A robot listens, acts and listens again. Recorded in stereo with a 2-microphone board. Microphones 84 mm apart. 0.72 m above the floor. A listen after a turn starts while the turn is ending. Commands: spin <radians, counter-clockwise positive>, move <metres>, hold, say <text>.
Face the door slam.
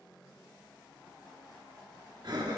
hold
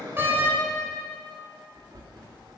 spin -0.44
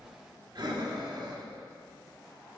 hold
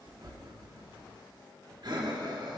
say I heard a door slam, but can't make it out now. It was about straight ahead or 130° right.